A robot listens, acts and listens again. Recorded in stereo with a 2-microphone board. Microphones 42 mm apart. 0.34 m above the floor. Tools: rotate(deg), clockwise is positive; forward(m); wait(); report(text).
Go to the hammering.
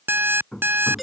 rotate(-20)
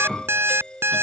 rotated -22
forward(1.0)
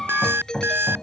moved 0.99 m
forward(1.0)
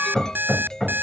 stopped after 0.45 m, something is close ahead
report("Arrived at the hammering, straight ahead.")